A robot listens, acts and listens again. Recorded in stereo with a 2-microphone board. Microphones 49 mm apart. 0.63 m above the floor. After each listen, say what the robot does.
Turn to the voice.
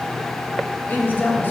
Turn 40° left.
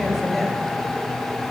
Keep listening.
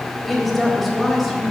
Facing the woman speaking.